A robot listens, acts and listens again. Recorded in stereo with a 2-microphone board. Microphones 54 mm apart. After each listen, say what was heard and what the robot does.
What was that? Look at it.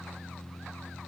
Keep listening.
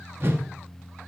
The whoosh: about 40° right or 140° right. Turn 40° right.
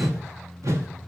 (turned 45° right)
So it is at 95° right. Turn 95° right.
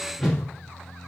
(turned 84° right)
The whoosh is now 10° right. Turn 10° right.
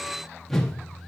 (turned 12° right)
Found it: a whoosh, straight ahead, under 1 m away.